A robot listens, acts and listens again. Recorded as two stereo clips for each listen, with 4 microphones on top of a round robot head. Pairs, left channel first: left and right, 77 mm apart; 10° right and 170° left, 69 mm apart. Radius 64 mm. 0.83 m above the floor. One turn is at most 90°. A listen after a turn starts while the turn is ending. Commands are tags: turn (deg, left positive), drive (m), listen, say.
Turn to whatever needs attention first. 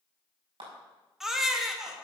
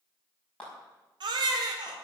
<turn deg="-90"/>
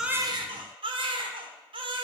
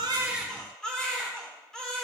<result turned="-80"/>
<turn deg="-90"/>
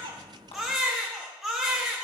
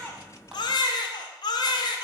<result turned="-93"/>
<say>Found it: a baby crying, straight ahead.</say>